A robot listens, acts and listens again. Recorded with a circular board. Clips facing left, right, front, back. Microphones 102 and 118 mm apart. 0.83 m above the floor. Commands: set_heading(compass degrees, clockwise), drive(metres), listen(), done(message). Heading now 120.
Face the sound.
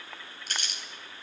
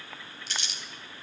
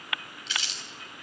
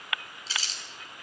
set_heading(355)
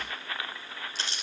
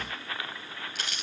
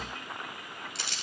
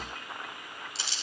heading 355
set_heading(325)
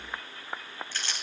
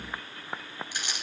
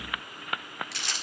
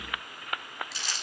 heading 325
set_heading(340)
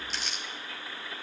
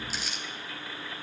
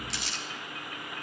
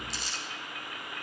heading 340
done("Facing the crumpling, 2 to 4 m away.")